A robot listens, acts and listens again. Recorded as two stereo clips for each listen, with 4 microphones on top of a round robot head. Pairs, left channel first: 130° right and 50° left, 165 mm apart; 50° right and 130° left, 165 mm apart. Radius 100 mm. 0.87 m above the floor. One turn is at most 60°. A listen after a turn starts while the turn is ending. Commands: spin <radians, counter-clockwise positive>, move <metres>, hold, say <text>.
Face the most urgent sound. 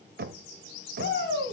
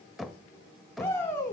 spin -1.05
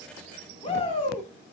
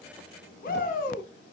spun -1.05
spin -1.05
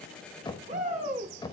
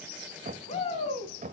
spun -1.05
say Found it: a shout, straight ahead, 2 to 4 m away.